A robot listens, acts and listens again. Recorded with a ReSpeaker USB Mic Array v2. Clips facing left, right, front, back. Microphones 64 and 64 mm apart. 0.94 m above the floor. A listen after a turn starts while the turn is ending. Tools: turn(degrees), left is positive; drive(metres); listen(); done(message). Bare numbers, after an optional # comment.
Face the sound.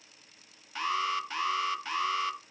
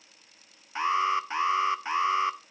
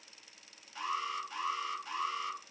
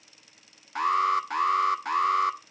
# The alarm: 155° right.
turn(-155)
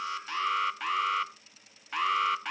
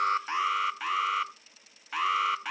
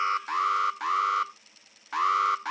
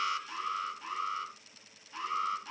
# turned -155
done("Facing the alarm, under 1 m away.")